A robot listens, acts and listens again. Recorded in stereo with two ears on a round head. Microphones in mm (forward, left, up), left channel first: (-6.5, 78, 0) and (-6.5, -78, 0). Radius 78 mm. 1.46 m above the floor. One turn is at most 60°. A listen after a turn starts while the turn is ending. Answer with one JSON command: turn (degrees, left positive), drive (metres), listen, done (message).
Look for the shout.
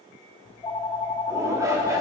{"turn": -20}
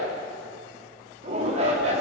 {"turn": -60}
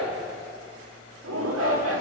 {"turn": -60}
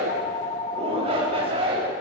{"turn": -35}
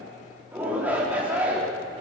{"turn": -10}
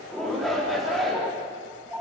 {"done": "Found it: a shout, straight ahead."}